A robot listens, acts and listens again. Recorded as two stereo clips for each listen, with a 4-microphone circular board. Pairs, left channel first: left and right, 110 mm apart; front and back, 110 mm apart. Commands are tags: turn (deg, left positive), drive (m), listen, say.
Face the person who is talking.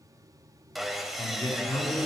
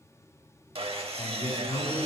<turn deg="40"/>
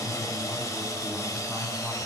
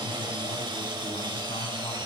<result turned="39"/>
<say>Facing the man speaking.</say>